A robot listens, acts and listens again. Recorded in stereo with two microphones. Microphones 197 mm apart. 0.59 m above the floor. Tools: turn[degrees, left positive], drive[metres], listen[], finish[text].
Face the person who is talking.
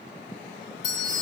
Action: listen[]
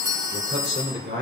Thought: The man speaking: about 60° right or 120° right.
Action: turn[-60]
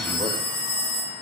Action: listen[]
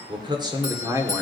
Thought: So it is at 10° right.
Action: turn[-10]
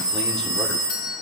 Action: listen[]
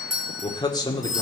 Thought: The man speaking is now 20° left.
Action: turn[20]
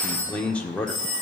Action: finish[Found it: a man speaking, straight ahead.]